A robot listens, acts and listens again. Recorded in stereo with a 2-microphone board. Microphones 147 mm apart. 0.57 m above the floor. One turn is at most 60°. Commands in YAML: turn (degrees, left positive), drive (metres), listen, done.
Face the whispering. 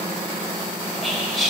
turn: 30
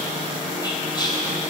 turn: 60
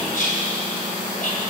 turn: 60
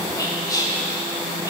turn: 25
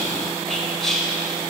done: "Facing the whispering, 2 to 4 m away."